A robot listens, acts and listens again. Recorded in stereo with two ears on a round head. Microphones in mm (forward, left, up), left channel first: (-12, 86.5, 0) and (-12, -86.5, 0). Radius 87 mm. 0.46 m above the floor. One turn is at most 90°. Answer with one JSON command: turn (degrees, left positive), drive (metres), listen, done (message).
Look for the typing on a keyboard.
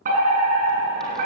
{"listen": true}
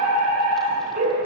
{"listen": true}
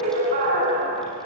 {"done": "I can't make out typing on a keyboard to turn to."}